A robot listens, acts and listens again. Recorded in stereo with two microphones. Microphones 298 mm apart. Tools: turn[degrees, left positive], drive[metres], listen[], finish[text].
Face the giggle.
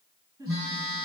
Action: turn[-30]
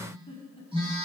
Thought: So it is at 20° left.
Action: turn[20]
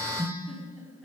Action: finish[Found it: a giggle, straight ahead, over 4 m away.]